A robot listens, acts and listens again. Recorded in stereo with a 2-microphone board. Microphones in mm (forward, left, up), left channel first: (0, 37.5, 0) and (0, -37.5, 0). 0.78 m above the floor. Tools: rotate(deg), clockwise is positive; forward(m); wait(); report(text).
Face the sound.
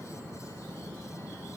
wait()
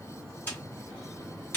rotate(-25)
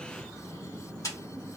rotate(-130)
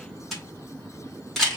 report("Found it: a camera shutter, straight ahead, 1 to 2 m away.")